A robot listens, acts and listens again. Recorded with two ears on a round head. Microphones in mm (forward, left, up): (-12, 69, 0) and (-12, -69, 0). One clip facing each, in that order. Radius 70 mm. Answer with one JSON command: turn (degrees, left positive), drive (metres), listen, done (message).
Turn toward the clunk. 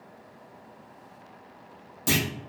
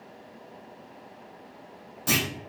{"turn": 30}
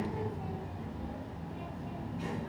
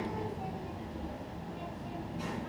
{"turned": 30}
{"listen": true}
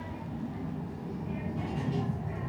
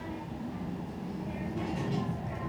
{"done": "I heard a clunk, but can't make it out now. It was about straight ahead or 120° left."}